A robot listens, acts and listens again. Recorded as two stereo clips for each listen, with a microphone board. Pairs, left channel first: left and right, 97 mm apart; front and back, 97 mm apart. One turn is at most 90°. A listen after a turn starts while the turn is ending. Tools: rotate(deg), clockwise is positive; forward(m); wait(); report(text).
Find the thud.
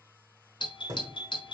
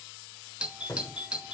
rotate(60)
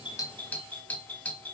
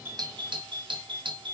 report("Facing where the thud came from. I can't hear it now.")